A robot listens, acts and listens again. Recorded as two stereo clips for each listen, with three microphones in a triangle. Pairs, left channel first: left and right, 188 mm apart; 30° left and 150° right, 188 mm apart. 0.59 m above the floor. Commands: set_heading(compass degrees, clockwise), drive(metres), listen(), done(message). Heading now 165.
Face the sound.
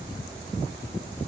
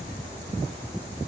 listen()
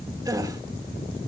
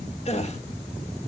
set_heading(185)
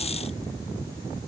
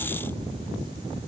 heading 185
done("I heard a gasp from this way, but can't make it out now.")